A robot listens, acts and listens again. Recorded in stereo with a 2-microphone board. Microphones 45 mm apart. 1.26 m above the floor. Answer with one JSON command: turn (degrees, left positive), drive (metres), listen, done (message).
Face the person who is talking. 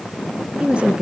{"turn": -25}
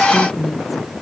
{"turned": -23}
{"done": "Found it: a woman speaking, straight ahead."}